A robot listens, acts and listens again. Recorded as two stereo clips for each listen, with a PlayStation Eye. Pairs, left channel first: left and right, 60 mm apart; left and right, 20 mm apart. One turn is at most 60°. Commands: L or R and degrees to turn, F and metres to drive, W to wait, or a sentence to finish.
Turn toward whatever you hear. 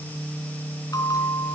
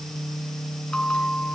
L60
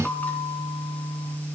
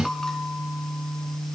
L30
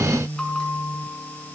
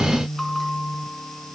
L15
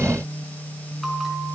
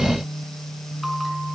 Facing the bell.